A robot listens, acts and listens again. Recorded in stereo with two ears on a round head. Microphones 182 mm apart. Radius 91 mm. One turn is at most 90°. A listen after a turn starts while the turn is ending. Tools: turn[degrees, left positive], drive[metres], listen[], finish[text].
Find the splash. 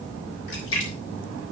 Thought: The splash: about 70° left or 110° left.
Action: turn[70]
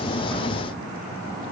Action: listen[]
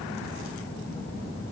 Action: finish[I heard a splash, but can't make it out now. It was about straight ahead or 40° left.]